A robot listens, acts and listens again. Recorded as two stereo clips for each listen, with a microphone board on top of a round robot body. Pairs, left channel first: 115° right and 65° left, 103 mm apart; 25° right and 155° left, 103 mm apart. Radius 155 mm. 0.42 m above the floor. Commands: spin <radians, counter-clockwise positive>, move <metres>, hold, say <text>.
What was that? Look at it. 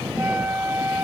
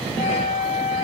say Found it: a flute, straight ahead.